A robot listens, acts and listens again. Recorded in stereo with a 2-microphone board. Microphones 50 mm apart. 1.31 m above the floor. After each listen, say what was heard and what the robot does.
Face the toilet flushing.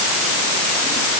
Keep listening.
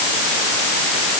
Keep listening.
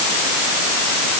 I can't make out a toilet flushing.